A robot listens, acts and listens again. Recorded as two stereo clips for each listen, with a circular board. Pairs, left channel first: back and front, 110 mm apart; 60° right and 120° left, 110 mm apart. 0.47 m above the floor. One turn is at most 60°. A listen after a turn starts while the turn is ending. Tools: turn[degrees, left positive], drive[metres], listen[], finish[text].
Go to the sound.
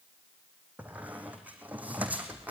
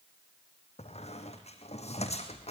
Thought: The squeak: 75° right.
Action: turn[-60]
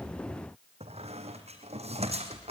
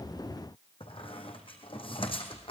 Thought: The squeak is now 25° right.
Action: turn[-25]
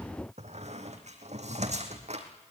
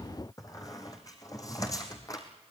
Action: drive[1.0]
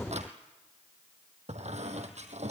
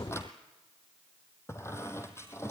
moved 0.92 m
Action: drive[1.0]
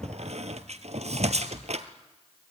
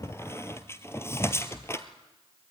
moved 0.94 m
Action: drive[1.0]
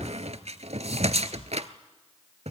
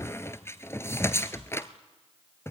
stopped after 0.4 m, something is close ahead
Action: finish[Arrived at the squeak, straight ahead.]